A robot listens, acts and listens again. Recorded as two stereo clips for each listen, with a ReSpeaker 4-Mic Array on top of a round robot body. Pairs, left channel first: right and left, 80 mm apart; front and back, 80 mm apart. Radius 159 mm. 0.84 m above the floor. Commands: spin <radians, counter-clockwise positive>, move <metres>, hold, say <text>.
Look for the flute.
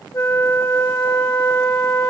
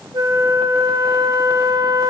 spin -2.44
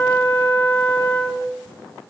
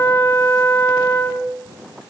spin -0.70
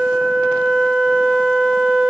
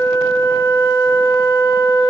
say Found it: a flute, straight ahead.